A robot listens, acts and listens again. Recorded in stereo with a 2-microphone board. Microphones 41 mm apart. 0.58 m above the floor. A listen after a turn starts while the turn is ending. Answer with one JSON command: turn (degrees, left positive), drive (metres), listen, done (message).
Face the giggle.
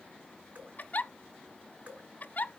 {"turn": 45}
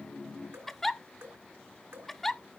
{"done": "Facing the giggle, under 1 m away."}